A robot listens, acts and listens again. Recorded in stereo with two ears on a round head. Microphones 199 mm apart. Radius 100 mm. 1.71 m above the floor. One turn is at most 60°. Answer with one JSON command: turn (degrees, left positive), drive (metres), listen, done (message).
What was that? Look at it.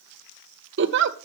{"turn": -55}
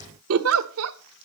{"turn": -60}
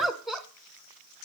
{"done": "Facing the giggle."}